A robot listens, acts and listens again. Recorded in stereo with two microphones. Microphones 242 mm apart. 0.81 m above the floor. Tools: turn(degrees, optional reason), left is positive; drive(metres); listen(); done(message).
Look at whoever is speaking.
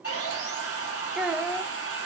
turn(degrees=-30)
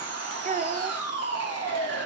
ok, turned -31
turn(degrees=-145, reason="So it is at 145° right.")
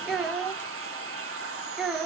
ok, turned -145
done("Found it: a child speaking, straight ahead, under 1 m away.")